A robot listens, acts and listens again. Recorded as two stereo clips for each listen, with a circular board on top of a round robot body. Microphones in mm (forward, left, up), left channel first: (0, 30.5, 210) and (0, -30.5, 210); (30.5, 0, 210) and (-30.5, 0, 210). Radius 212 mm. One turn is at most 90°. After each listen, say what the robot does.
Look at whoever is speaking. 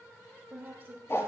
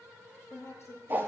Turn 40° right.
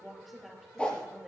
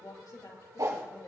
Facing the woman speaking.